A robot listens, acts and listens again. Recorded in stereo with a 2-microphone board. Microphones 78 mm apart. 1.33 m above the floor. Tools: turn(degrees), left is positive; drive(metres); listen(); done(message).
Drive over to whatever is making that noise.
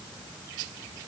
listen()
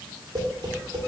turn(degrees=-65)
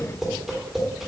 drive(metres=1.0)
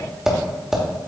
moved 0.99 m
drive(metres=1.0)
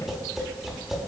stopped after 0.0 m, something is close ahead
done("Arrived at the tapping, straight ahead.")